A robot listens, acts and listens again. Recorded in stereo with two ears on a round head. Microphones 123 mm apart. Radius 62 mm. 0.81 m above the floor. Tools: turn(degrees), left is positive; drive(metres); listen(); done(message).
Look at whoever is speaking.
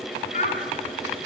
turn(degrees=50)
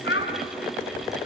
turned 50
turn(degrees=80)
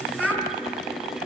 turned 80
done("Found it: a child speaking, straight ahead, over 4 m away.")